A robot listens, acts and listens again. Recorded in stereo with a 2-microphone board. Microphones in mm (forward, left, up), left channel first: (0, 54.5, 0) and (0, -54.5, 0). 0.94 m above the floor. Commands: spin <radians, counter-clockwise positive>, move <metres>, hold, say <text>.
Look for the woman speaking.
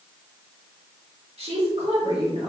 spin -0.96
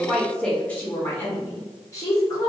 spin 0.61
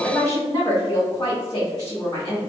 spin 0.61
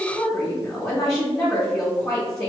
say Facing the woman speaking, 1 to 2 m away.